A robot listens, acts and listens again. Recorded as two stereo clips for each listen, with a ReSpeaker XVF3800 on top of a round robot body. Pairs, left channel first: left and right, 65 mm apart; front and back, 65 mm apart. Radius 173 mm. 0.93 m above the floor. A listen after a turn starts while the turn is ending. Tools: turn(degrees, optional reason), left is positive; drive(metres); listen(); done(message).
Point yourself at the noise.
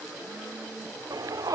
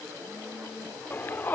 turn(degrees=-60, reason="The shout: 60° right.")
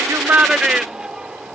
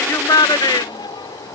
turn(degrees=-10, reason="The shout is now 10° right.")
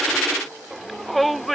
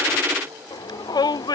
done("Facing the shout.")